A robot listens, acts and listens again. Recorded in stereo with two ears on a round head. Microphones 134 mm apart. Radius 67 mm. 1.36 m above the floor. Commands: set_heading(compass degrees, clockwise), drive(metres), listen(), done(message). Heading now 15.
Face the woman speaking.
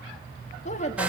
set_heading(330)
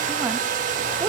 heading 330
listen()
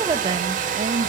set_heading(15)
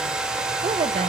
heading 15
listen()
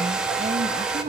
set_heading(65)
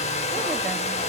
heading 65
listen()
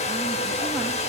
listen()
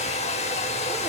done("I heard a woman speaking from this way, but can't make it out now.")